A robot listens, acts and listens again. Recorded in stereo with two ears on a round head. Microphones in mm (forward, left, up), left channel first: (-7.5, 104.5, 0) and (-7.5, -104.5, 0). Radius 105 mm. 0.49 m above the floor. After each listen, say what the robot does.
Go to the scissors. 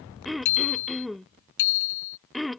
Keep listening.
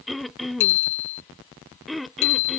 Keep listening.
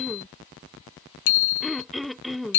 I can't make out scissors, only throat clearing and a bicycle bell.